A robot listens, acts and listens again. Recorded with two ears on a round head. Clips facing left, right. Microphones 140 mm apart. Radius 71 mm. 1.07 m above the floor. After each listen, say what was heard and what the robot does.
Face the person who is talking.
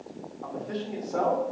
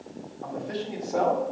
Turn 30° right.
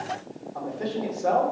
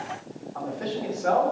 So it is at 25° left. Turn 25° left.
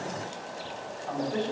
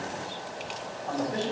Facing the man speaking, 2 to 4 m away.